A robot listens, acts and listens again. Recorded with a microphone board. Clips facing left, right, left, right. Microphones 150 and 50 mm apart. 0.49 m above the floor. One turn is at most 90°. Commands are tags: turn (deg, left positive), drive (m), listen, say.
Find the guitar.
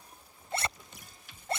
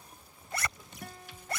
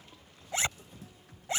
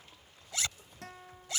<turn deg="-65"/>
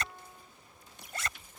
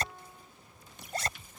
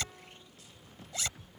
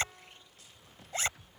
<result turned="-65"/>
<listen/>
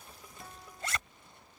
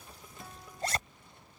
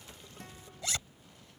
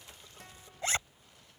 <listen/>
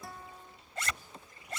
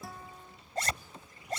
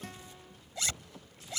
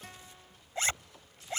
<say>Found it: a guitar, straight ahead.</say>